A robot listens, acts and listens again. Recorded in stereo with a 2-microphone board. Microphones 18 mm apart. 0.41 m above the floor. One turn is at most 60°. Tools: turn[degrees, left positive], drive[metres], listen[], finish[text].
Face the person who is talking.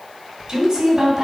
Thought: The woman speaking: about 30° right or 150° right.
Action: turn[-30]
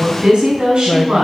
Thought: So it is at 125° right.
Action: turn[-60]
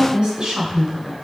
Thought: The woman speaking is now 60° right.
Action: turn[-60]
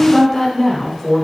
Action: finish[Facing the woman speaking.]